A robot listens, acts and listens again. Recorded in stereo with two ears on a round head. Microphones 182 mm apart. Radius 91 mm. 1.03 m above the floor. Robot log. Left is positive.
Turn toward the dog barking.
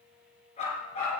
note: The dog barking: about 35° left or 145° left.
cmd yaw +35
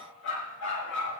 note: So it is at 115° left.
cmd yaw +115
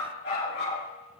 note: The dog barking is now 55° left.
cmd yaw +55
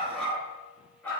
note: The dog barking is now 10° left.
cmd yaw +10
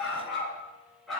end: Facing the dog barking, over 4 m away.